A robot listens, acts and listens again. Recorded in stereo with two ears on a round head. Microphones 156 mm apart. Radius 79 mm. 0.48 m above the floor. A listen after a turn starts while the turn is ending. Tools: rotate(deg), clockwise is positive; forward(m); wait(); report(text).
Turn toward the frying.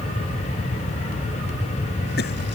wait()
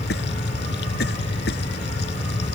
wait()
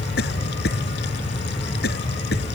report("I can't make out frying to turn to.")